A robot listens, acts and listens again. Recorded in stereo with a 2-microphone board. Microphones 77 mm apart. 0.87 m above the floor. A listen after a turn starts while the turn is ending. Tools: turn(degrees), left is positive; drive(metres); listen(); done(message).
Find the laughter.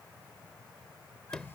listen()
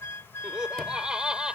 turn(degrees=-30)
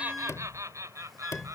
turn(degrees=-140)
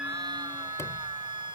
listen()
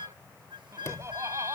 turn(degrees=-40)
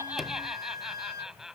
done("Facing the laughter.")